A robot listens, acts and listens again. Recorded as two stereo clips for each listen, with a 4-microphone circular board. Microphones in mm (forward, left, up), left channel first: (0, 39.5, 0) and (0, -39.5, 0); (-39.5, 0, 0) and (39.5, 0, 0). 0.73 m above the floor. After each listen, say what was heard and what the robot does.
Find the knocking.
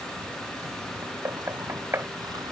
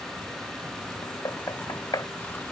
The knocking: 145° right. Turn 145° right.
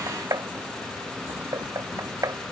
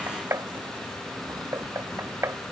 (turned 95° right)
The knocking is now 50° right. Turn 50° right.
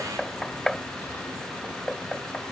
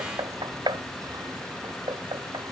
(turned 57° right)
The knocking is now 10° left. Turn 10° left.
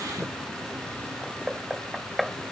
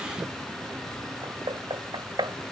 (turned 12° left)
Facing the knocking.